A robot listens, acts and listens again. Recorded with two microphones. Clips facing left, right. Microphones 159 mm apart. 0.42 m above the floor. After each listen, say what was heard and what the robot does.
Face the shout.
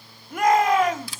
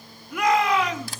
The shout: about 50° left or 130° left. Turn 50° left.
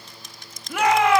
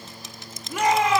So it is at 80° left. Turn 80° left.
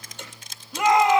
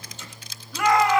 The shout is now 25° left. Turn 25° left.
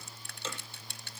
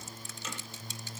Keep listening.
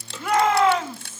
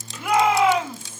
The shout is now 10° right. Turn 10° right.
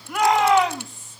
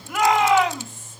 Found it: a shout, straight ahead.